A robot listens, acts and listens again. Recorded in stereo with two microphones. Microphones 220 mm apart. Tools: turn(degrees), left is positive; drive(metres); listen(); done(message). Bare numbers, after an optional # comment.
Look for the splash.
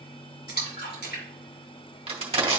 # The splash: about 45° left or 135° left.
turn(45)
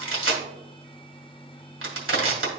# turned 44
listen()
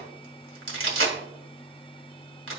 done("I heard a splash, but can't make it out now. It was about straight ahead or 90° left.")